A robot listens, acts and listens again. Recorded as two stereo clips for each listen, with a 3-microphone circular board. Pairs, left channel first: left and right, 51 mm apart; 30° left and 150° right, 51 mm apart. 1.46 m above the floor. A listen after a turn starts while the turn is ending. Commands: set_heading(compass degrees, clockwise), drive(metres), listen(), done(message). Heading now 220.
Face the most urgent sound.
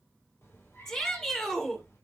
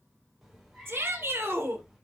set_heading(50)
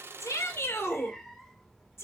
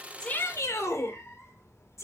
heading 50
set_heading(355)
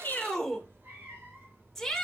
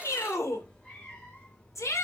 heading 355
set_heading(345)
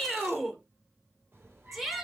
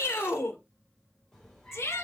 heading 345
done("Found it: a shout, straight ahead.")